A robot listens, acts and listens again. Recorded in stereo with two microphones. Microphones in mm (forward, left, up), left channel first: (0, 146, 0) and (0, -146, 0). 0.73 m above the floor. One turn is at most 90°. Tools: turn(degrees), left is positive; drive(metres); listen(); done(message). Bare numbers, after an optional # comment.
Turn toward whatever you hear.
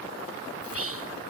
# The whispering: about 50° right or 130° right.
turn(-50)
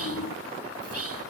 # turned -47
# So it is at 70° right.
turn(-70)
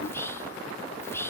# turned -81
# The whispering is now 10° left.
turn(10)
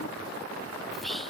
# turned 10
done("Found it: whispering, straight ahead.")